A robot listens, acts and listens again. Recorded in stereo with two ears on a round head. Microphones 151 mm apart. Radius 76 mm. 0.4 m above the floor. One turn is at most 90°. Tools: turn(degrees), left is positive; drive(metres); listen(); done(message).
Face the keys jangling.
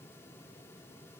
listen()
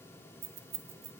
turn(degrees=-40)
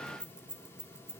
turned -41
done("Found it: keys jangling, straight ahead.")